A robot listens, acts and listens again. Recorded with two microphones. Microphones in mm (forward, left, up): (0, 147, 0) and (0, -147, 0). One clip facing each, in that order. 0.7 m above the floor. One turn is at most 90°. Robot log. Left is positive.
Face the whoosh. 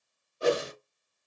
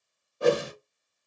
note: The whoosh: about 65° right or 115° right.
cmd yaw -65
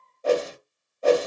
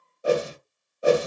note: So it is at 15° right.
cmd yaw -15
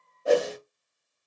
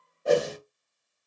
end: Facing the whoosh, under 1 m away.